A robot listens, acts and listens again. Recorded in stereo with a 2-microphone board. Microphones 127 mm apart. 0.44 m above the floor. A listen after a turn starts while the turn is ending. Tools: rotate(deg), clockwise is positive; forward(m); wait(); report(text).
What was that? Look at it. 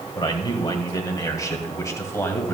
rotate(-20)
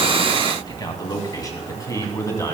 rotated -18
rotate(-25)
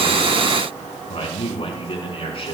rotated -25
rotate(-135)
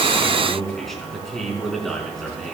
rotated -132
report("Found it: a man speaking, straight ahead, over 4 m away.")